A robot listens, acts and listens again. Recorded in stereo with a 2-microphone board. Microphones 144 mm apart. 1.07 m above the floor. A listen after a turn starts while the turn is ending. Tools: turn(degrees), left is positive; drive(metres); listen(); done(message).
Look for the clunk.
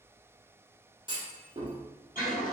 turn(degrees=-30)
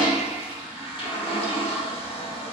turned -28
listen()
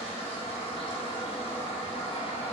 done("I heard a clunk, but can't make it out now. It was about 5° right or 120° right.")